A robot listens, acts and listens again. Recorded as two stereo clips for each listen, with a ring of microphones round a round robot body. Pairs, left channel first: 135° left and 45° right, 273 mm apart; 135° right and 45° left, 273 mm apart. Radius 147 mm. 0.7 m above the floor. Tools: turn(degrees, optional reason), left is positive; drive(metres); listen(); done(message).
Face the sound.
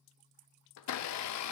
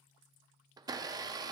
turn(degrees=120, reason="The blender: 120° left.")
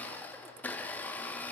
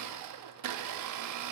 turn(degrees=50, reason="The blender is now 50° left.")
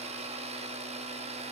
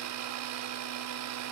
turn(degrees=20, reason="The blender is now 20° left.")
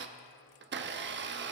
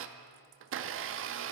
done("Found it: a blender, straight ahead.")